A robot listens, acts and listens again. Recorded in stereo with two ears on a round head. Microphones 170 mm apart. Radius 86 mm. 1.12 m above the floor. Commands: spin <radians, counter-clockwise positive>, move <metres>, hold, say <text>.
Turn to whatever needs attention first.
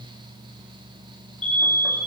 spin 0.52
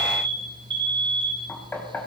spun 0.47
spin -0.44
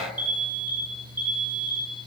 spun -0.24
spin -0.17
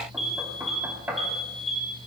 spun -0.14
say Facing the alarm, 2 to 4 m away.